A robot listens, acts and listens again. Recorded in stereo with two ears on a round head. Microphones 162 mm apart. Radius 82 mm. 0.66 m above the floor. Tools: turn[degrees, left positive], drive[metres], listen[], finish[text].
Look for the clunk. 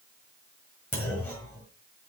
Action: turn[30]
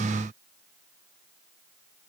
Action: listen[]
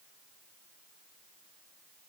Action: finish[I heard a clunk, but can't make it out now. It was about 15° right or 135° left.]